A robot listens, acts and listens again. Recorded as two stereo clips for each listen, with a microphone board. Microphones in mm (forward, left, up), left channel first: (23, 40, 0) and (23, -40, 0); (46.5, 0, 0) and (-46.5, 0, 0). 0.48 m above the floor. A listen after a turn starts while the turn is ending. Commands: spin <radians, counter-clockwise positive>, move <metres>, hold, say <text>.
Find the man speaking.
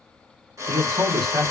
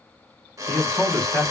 spin -1.31
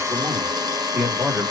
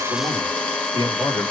spin -0.44
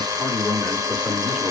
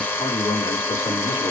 spin -0.17
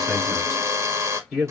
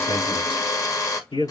say Found it: a man speaking, straight ahead, over 4 m away.